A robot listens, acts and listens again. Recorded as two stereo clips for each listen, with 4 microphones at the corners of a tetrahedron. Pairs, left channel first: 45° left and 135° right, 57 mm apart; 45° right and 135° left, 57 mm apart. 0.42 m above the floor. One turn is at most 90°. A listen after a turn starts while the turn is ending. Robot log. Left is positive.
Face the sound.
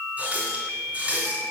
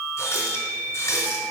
note: The running tap: 70° right.
cmd yaw -70
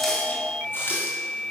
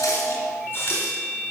end: Found it: a running tap, straight ahead, 2 to 4 m away.